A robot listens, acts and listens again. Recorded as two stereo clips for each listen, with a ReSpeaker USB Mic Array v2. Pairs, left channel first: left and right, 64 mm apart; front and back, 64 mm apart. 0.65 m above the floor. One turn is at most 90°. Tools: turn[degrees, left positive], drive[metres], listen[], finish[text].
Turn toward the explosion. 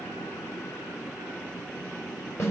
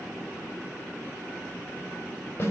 Action: listen[]
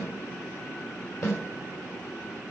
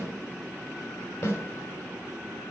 Action: listen[]
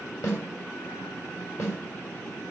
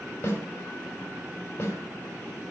Action: finish[I can't make out an explosion to turn to.]